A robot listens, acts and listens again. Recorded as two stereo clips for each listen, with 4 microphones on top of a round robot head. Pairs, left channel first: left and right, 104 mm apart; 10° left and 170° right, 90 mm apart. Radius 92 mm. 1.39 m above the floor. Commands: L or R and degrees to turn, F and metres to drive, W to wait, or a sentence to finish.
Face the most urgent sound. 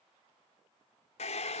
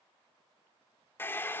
W
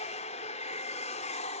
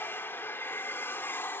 W
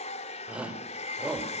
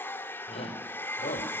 R10
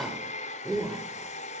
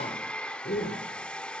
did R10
Found it: a shout, straight ahead, over 4 m away.